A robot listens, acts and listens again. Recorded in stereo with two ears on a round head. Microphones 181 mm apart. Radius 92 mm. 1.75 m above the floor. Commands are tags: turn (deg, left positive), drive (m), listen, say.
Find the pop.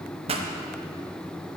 <turn deg="-30"/>
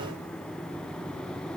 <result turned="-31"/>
<listen/>
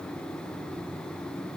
<say>I heard a pop, but can't make it out now. It was about 5° left or 120° right.</say>